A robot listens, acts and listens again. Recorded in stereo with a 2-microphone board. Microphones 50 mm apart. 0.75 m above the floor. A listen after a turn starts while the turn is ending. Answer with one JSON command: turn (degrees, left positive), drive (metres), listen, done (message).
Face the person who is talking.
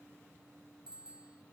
{"listen": true}
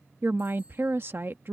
{"turn": -45}
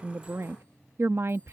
{"turn": -75}
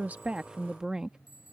{"turn": -15}
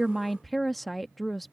{"done": "Found it: a woman speaking, straight ahead."}